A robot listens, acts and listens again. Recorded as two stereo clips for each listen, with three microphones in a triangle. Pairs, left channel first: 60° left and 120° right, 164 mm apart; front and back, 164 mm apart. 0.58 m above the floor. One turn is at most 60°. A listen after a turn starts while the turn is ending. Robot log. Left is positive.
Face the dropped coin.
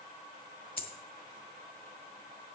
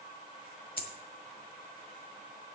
note: The dropped coin: 30° left.
cmd yaw +30
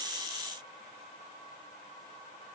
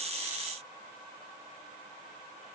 end: Facing where the dropped coin came from. I can't hear it now.